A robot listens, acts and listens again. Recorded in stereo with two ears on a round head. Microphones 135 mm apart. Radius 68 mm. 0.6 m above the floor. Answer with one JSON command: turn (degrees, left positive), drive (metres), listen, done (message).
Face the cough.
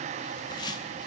{"listen": true}
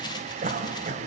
{"turn": -50}
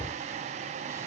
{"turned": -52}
{"listen": true}
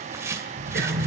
{"turn": -75}
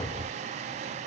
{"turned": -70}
{"listen": true}
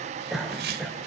{"done": "Facing the cough, 2 to 4 m away."}